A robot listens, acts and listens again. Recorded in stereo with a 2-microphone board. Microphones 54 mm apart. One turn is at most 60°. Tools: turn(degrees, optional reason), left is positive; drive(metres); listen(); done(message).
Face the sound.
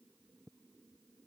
listen()
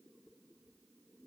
listen()
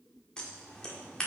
turn(degrees=30)
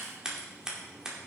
turn(degrees=-15, reason="So it is at 15° right.")
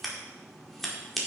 done("Found it: scissors, straight ahead.")